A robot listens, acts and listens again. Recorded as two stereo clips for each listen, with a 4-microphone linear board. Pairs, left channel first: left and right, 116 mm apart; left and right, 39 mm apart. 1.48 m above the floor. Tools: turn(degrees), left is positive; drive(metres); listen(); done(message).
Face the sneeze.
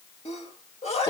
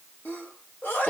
turn(degrees=65)
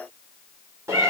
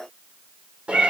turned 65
listen()
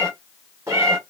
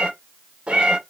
done("I heard a sneeze, but can't make it out now. It was about straight ahead or 50° left.")